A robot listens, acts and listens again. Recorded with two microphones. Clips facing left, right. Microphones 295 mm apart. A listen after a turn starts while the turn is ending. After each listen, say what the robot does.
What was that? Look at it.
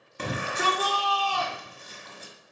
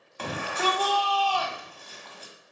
Turn 25° left.
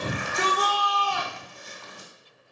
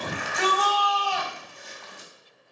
Turn 120° left.
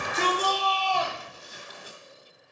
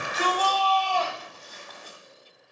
Turn 15° left.
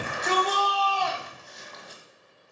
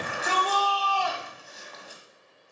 Facing the shout.